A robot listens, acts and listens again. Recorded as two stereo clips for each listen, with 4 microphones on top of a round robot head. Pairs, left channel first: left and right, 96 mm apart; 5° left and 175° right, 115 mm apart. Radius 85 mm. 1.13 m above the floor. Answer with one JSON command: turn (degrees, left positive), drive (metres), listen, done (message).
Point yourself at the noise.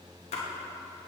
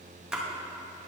{"turn": 100}
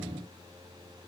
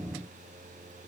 {"done": "I heard a splash from this way, but can't make it out now."}